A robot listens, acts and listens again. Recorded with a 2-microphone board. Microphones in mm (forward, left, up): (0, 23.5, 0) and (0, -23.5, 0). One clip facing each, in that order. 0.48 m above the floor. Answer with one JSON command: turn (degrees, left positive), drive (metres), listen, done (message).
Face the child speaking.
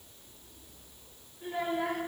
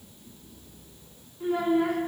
{"turn": -90}
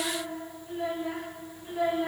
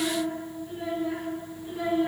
{"turn": 15}
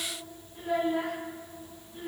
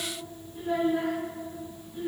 {"turn": 10}
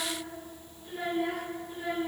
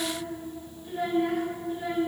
{"done": "Found it: a child speaking, straight ahead."}